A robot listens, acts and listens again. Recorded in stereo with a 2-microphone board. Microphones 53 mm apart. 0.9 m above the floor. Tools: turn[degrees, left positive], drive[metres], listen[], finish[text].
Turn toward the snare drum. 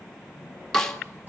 Action: turn[30]
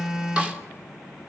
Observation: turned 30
Action: listen[]
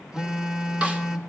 Action: listen[]
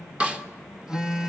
Thought: So it is at 20° right.
Action: turn[-20]
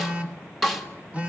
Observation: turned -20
Action: finish[Found it: a snare drum, straight ahead.]